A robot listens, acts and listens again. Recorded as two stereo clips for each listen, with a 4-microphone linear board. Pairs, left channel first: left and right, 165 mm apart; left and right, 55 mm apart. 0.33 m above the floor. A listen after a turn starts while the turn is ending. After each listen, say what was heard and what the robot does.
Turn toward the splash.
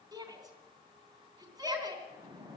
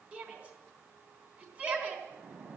The splash: about 20° right or 160° right. Turn 20° right.
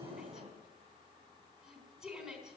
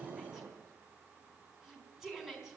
So it is at 135° right. Turn 135° right.
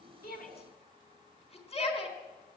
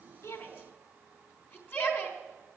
I heard a splash from this way, but can't make it out now.